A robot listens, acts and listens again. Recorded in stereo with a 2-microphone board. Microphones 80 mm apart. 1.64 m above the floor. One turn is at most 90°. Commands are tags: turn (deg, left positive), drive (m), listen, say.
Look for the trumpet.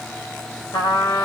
<turn deg="60"/>
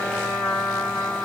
<turn deg="10"/>
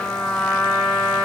<say>Found it: a trumpet, straight ahead, 2 to 4 m away.</say>